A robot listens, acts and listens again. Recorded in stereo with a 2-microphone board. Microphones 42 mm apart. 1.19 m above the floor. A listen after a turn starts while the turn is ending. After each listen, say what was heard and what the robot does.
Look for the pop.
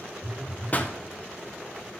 The pop: about 35° left or 145° left. Turn 35° left.
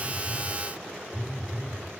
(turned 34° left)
Keep listening.
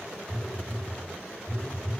I heard a pop, but can't make it out now. It was about straight ahead or 110° left.